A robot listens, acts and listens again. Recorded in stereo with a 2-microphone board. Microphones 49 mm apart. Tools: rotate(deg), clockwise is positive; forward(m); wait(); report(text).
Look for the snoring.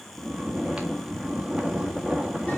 rotate(30)
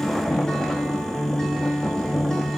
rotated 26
rotate(-10)
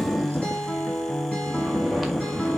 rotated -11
report("Facing the snoring, 1 to 2 m away.")